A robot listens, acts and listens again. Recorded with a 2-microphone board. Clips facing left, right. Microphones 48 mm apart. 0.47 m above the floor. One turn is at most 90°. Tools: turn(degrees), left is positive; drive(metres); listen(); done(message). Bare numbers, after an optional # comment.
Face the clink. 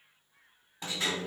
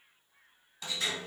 listen()
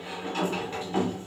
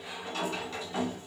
listen()
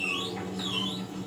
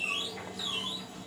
done("I can't make out a clink, only a sliding door.")